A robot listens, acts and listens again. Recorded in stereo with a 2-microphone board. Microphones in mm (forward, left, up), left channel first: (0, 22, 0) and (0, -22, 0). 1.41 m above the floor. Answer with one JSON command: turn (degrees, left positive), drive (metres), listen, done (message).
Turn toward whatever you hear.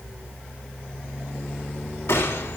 {"turn": 90}
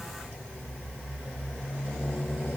{"done": "Facing where the gunshot came from. I can't hear it now."}